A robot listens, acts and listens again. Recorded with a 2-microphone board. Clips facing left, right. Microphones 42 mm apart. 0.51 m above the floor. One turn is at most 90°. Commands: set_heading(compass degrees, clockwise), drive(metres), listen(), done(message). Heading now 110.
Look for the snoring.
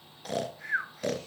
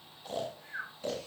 set_heading(35)
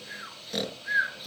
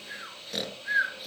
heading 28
done("Found it: snoring, straight ahead.")